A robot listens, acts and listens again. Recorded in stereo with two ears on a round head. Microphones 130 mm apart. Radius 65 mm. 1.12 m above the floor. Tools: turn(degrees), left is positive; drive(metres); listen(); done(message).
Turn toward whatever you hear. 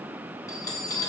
turn(degrees=25)
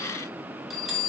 done("Facing the bell, 1 to 2 m away.")